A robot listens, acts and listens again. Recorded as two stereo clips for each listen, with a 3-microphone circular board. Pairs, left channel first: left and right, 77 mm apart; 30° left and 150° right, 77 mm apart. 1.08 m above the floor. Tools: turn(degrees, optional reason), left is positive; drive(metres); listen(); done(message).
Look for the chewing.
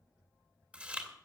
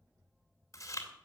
turn(degrees=-15, reason="The chewing: 15° right.")
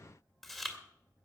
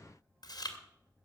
done("Found it: chewing, straight ahead.")